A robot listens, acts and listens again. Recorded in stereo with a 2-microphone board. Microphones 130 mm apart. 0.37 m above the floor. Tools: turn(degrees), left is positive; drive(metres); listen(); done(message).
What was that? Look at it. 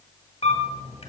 turn(degrees=50)
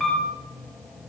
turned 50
done("Facing the camera shutter.")